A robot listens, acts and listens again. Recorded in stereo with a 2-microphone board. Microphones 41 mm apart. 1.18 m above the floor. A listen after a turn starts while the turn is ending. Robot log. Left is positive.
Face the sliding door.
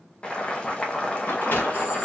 note: The sliding door: about 60° left or 120° left.
cmd yaw +60
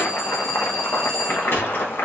note: So it is at 65° left.
cmd yaw +65
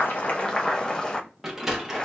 note: The sliding door is now 10° right.
cmd yaw -10
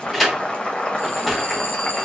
end: Found it: a sliding door, straight ahead, 1 to 2 m away.